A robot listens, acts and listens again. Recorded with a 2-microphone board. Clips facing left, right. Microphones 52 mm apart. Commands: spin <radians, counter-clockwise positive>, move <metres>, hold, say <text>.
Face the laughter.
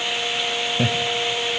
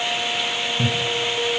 spin 1.05
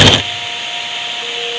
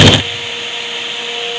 hold
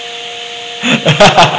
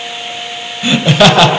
spin 0.61
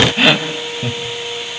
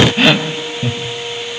say Facing the laughter, 1 to 2 m away.